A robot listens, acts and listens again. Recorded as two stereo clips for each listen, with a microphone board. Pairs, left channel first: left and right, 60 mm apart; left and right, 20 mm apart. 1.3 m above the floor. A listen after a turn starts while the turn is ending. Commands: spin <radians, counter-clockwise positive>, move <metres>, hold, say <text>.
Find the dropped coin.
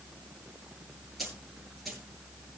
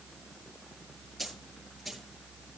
spin 0.52
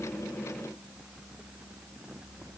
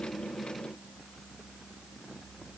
hold
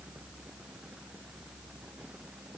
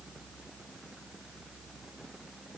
say I heard a dropped coin, but can't make it out now. It was about 30° right or 150° left.